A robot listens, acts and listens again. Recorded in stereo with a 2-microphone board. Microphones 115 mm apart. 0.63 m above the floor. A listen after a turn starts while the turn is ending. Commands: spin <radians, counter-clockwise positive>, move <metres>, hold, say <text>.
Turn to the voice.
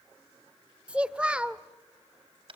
spin -0.52
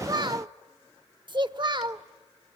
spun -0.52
spin -2.44
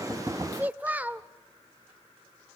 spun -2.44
spin -0.26
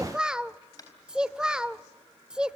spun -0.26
spin -0.17
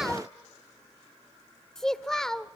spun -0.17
say Facing the child speaking.